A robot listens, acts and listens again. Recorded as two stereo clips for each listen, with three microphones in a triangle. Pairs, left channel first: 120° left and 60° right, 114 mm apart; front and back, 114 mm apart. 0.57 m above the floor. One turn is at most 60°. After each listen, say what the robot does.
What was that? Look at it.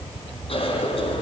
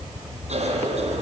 Turn 60° left.
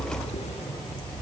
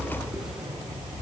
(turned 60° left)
Turn 60° left.
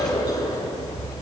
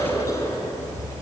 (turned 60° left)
Turn 60° left.
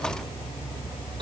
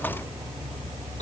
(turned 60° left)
Keep listening.
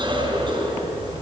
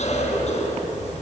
Turn 15° right.
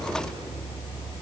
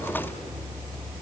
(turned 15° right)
Keep listening.
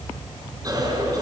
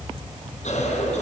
Facing the cough.